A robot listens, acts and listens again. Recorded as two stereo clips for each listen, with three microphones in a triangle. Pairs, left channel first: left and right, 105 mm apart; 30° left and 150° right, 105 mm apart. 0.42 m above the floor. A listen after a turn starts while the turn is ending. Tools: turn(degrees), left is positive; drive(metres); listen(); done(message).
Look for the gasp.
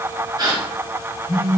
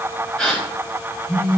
turn(degrees=-50)
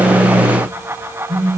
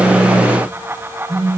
done("I heard a gasp from this way, but can't make it out now.")